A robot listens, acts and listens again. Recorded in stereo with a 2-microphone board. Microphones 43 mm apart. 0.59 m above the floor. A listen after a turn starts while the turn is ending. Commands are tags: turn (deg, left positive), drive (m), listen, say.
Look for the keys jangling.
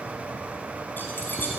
<turn deg="45"/>
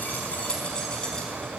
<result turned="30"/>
<turn deg="20"/>
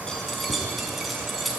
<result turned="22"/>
<say>Found it: keys jangling, straight ahead.</say>